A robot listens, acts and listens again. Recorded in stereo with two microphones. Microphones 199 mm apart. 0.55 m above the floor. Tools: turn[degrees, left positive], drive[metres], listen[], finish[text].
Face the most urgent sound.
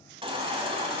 Thought: The baby crying: about 30° right or 150° right.
Action: turn[-30]
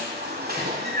Thought: So it is at 125° right.
Action: turn[-125]
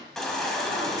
Action: finish[Found it: a baby crying, straight ahead, 1 to 2 m away.]